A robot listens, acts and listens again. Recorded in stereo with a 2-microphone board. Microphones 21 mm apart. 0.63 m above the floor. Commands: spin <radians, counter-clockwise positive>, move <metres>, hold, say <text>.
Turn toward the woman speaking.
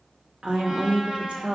spin -1.05
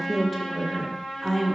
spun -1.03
spin 0.17
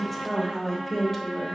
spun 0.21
spin 0.26
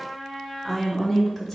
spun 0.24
spin 0.17
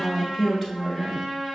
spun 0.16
say Found it: a woman speaking, straight ahead, 2 to 4 m away.